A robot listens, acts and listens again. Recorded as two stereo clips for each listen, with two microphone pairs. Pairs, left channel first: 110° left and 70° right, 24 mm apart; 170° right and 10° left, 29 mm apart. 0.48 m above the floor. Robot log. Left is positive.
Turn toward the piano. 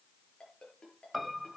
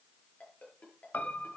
note: The piano: 155° right.
cmd yaw -155
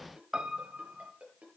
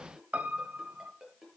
note: The piano is now 20° right.
cmd yaw -20
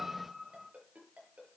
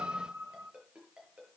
end: Found it: a piano, straight ahead.